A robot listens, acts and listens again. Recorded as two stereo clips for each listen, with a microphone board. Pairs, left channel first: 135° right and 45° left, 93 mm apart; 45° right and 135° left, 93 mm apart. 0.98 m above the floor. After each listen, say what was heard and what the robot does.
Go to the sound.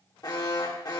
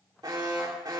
The alarm: straight behind. Turn 180° left.
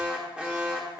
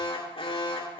The alarm is now 35° right. Turn 35° right.
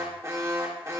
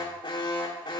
The alarm is now 15° right. Turn 15° right.
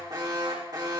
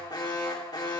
Drive 1.0 m forward.
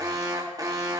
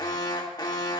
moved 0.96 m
Drive 1.0 m forward.
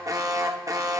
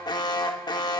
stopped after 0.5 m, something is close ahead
I am next to the alarm.